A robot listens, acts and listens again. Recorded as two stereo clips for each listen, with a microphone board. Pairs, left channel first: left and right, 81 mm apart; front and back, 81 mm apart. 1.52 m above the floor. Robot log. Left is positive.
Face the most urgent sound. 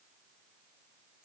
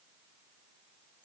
cmd idle
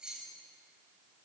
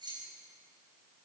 cmd idle
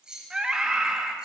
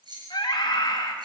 note: The scream: 10° right.
cmd yaw -10
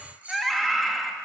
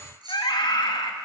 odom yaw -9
end: Found it: a scream, straight ahead, 2 to 4 m away.